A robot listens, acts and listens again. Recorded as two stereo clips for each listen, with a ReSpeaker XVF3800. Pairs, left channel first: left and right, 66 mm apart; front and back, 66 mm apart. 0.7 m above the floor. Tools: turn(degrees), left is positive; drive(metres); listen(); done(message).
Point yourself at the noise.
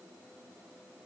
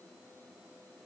listen()
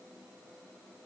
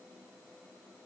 listen()
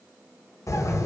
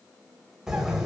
turn(degrees=100)
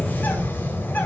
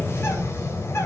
turn(degrees=35)
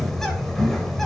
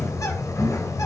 done("Found it: a bird, straight ahead, 2 to 4 m away.")